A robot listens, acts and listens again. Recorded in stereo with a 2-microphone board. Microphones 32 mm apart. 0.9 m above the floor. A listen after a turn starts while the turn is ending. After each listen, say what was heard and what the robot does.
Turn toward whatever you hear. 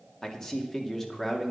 Turn 30° left.
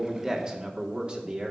So it is at 35° right. Turn 35° right.
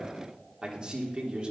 The man speaking is now 35° right. Turn 35° right.
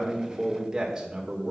The man speaking is now 25° right. Turn 25° right.
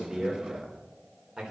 The man speaking is now 10° right. Turn 10° right.
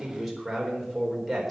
Found it: a man speaking, straight ahead.